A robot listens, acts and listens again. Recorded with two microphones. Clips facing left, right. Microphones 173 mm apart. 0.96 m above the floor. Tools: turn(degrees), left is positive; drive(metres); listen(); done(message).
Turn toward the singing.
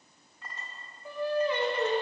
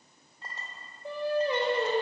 turn(degrees=-35)
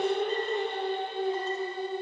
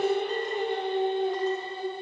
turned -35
turn(degrees=-30)
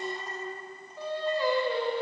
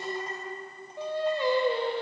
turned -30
turn(degrees=-25)
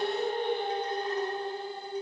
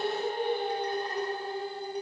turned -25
turn(degrees=-10)
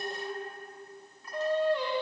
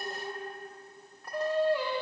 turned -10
done("Found it: singing, straight ahead.")